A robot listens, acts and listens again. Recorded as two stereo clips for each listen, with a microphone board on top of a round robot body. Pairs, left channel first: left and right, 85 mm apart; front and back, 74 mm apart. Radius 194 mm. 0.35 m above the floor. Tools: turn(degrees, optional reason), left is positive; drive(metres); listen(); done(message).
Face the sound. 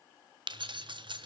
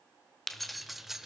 turn(degrees=-95, reason="The keys jangling: 95° right.")
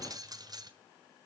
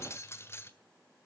turn(degrees=-55, reason="The keys jangling is now 55° right.")
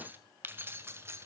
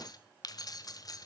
turn(degrees=-30, reason="The keys jangling is now 30° right.")
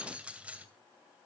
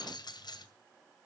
turn(degrees=-15, reason="The keys jangling is now 15° right.")
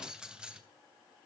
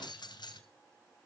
turn(degrees=-10, reason="The keys jangling is now 10° right.")
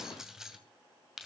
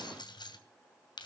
done("Found it: keys jangling, straight ahead.")